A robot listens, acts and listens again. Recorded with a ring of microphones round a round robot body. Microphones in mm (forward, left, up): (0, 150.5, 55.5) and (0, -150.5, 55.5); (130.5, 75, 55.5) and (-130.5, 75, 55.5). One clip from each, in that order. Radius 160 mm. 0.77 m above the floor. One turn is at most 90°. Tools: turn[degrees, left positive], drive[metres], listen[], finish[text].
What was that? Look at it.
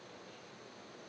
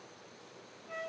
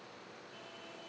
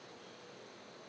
Action: listen[]
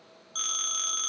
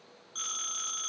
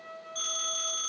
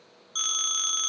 Thought: The phone ringing: 160° left.
Action: turn[90]
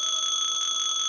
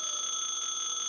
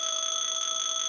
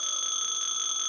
Thought: The phone ringing is now 85° left.
Action: turn[85]
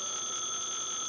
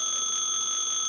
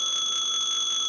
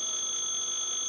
Thought: The phone ringing is now 15° right.
Action: turn[-15]
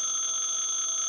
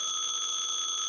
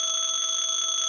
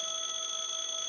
Thought: The phone ringing is now 10° right.
Action: turn[-10]
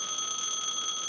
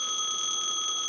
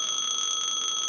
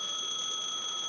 Action: finish[Facing the phone ringing, 1 to 2 m away.]